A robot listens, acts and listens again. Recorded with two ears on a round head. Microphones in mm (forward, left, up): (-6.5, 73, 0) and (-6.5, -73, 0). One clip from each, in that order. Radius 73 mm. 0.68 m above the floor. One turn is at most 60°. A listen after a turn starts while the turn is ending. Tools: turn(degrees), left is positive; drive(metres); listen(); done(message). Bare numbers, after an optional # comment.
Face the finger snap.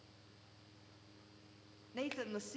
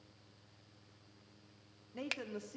# The finger snap: about 50° right or 130° right.
turn(-50)
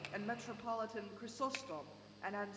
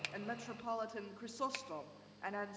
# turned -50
listen()
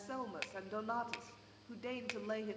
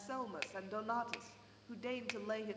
done("Found it: a finger snap, straight ahead, under 1 m away.")